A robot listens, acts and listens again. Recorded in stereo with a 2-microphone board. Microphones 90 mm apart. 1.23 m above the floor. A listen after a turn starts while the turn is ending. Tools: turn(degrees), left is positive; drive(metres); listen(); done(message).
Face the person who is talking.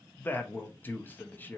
turn(degrees=20)
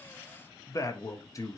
turn(degrees=140)
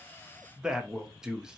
turn(degrees=-10)
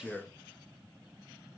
done("Found it: a man speaking, straight ahead.")